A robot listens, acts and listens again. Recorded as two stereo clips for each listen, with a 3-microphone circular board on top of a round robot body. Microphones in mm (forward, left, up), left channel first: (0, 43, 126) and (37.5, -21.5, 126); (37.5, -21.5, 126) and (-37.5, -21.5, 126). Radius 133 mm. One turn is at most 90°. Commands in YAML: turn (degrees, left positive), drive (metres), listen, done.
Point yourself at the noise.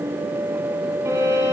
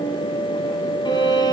turn: -10
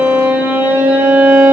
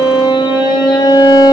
done: "Facing the violin."